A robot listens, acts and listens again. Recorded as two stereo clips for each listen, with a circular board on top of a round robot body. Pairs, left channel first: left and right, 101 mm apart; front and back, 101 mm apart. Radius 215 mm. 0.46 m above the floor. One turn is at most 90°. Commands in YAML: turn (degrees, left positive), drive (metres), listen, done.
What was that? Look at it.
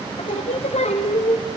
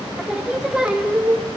turn: 90
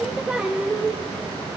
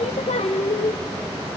turn: -10
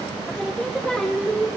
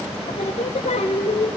done: "Found it: singing, straight ahead, 1 to 2 m away."